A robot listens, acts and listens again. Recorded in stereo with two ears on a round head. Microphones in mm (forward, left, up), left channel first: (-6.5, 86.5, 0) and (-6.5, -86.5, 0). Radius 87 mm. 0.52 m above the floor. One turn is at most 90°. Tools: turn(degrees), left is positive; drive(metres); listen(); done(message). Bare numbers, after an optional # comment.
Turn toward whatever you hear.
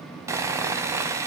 # The sawing: about 15° right or 165° right.
turn(-15)
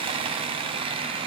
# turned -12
# So it is at 150° right.
turn(-90)
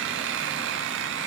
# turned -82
# The sawing is now 65° right.
turn(-65)
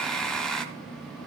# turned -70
done("Found it: sawing, straight ahead.")